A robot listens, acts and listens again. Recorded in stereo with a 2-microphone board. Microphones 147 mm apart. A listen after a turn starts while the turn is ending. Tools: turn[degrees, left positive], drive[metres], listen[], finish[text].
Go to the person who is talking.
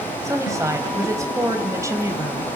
Thought: The woman speaking: about 20° right or 160° right.
Action: turn[-20]
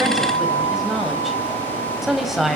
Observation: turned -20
Action: drive[1.0]
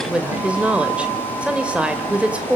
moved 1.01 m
Thought: The woman speaking is now 10° right.
Action: turn[-10]
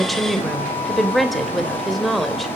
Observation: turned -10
Action: drive[1.0]
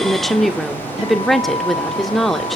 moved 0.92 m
Action: drive[1.0]
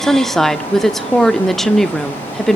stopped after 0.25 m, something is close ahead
Action: finish[I am next to the woman speaking.]